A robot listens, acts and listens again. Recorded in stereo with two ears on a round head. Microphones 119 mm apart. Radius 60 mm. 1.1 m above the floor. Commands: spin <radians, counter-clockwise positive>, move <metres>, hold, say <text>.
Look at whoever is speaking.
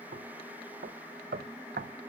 hold
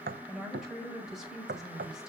spin -0.52
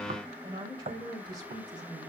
spin -2.53
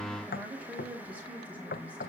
spin -0.17
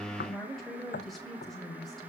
say Found it: a woman speaking, straight ahead, over 4 m away.